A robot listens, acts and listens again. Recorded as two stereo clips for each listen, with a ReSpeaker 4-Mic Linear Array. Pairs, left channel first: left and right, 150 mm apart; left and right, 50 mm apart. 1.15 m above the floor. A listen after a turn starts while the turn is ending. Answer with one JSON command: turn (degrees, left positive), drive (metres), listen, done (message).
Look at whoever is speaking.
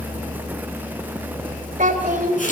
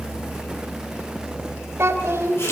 {"turn": -60}
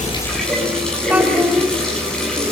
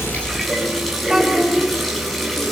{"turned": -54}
{"listen": true}
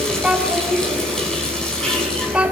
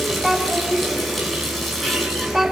{"turn": -10}
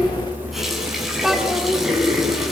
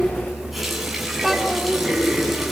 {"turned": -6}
{"listen": true}
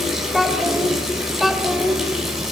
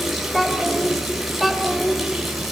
{"done": "Facing the child speaking."}